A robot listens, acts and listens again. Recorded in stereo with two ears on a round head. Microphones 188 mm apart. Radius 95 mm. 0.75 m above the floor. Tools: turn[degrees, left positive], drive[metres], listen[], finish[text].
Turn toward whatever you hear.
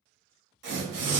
Thought: The tearing paper: about 60° right or 120° right.
Action: turn[-60]
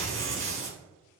Thought: So it is at 60° right.
Action: turn[-60]
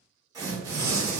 Thought: The tearing paper is now 15° right.
Action: turn[-15]
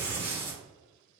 Thought: The tearing paper is now 10° right.
Action: turn[-10]
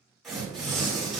Action: finish[Found it: tearing paper, straight ahead, 1 to 2 m away.]